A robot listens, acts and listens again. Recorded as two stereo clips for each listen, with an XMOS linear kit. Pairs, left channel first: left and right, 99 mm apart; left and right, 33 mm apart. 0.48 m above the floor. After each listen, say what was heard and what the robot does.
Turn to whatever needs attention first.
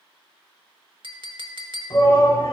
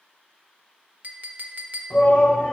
The shout: about 35° left or 145° left. Turn 35° left.
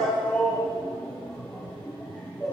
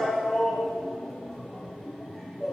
So it is at 10° left. Turn 10° left.
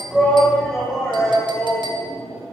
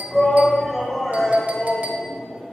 Found it: a shout, straight ahead.